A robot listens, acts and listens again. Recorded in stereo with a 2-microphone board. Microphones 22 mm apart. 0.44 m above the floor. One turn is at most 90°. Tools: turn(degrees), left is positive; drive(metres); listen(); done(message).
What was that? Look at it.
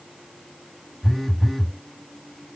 turn(degrees=30)
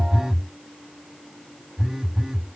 turn(degrees=-35)
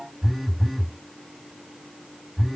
turn(degrees=-10)
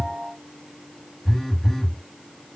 done("Facing the phone buzzing.")